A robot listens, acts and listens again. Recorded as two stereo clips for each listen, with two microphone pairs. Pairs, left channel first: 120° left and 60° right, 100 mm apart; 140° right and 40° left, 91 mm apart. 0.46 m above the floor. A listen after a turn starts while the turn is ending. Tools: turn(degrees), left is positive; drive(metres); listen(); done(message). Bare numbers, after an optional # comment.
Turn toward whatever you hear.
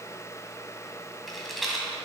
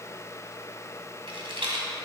# The rattle: 30° left.
turn(30)
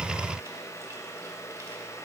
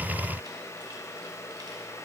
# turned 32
listen()
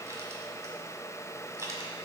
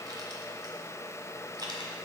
done("Found it: a rattle, straight ahead, 1 to 2 m away.")